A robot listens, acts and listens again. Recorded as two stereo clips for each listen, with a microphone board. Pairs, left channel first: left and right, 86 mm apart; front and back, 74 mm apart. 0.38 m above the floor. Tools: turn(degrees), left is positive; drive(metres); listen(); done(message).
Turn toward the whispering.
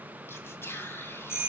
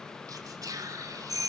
turn(degrees=150)
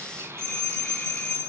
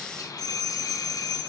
turn(degrees=-30)
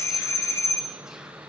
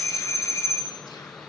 listen()
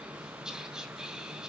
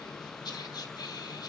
turn(degrees=-10)
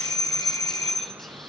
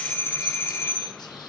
listen()
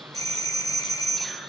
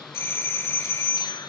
listen()
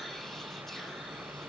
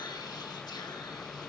done("Facing where the whispering came from. I can't hear it now.")